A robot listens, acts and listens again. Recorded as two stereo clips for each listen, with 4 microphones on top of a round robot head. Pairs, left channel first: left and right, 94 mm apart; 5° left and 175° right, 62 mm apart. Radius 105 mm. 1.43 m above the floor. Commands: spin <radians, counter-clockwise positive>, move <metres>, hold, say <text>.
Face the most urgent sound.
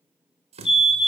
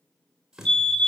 spin 1.31
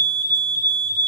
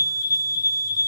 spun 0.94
spin 0.35
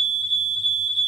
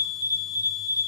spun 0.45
say Found it: a fire alarm, straight ahead, 1 to 2 m away.